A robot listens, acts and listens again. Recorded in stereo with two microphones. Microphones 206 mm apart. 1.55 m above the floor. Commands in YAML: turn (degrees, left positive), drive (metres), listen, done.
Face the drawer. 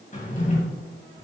turn: 40
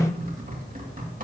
done: "Facing the drawer, 2 to 4 m away."